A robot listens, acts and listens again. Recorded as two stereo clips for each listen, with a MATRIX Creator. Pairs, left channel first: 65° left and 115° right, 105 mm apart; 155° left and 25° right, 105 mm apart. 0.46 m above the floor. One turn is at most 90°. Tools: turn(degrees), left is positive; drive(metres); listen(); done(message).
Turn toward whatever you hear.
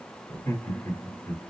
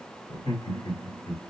turn(degrees=90)
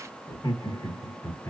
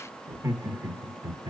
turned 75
turn(degrees=15)
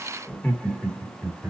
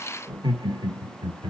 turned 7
turn(degrees=-25)
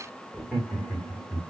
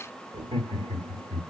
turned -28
turn(degrees=-20)
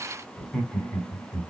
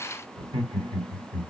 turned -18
done("Facing the laughter, 1 to 2 m away.")